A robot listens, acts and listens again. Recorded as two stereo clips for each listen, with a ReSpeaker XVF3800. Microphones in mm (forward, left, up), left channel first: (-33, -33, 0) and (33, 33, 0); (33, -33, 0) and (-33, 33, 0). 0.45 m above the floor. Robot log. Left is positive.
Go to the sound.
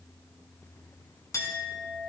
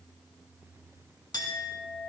note: The clink: 85° right.
cmd yaw -85
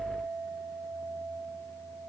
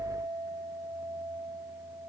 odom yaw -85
note: The clink is now 10° right.
cmd yaw -10
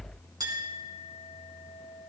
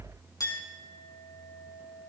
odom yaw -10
cmd fwd 1.0
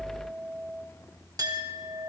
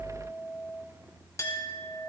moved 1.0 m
cmd fwd 1.0
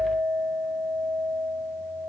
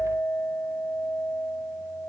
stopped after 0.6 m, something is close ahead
end: I am next to the clink.